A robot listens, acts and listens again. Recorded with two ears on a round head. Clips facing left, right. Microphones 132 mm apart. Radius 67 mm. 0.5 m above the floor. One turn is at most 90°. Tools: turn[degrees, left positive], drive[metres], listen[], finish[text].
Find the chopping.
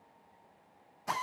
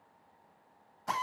Action: listen[]
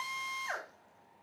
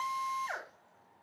Action: listen[]
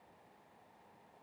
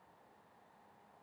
Action: finish[I can't make out chopping, only a drill.]